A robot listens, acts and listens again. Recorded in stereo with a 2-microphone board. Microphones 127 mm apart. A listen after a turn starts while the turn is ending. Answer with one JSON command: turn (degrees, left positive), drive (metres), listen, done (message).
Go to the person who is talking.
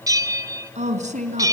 {"turn": -65}
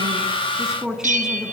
{"drive": 1.0}
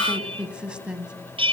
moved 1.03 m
{"turn": -10}
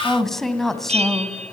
{"drive": 1.0}
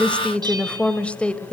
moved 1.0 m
{"turn": 10}
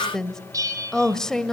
{"drive": 1.0}
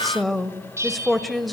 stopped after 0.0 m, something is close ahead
{"done": "I am next to the woman speaking."}